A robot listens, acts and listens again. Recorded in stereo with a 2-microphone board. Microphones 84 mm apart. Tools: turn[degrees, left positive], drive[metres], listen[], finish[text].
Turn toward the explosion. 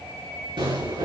Action: turn[-90]
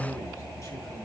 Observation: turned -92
Action: finish[Facing where the explosion came from. I can't hear it now.]